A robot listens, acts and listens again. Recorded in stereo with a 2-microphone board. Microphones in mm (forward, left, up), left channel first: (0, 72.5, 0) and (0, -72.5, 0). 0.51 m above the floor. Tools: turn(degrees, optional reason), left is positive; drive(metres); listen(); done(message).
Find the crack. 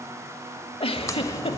turn(degrees=20, reason="The crack: about 20° left or 160° left.")
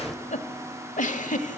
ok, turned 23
done("Facing the crack, under 1 m away.")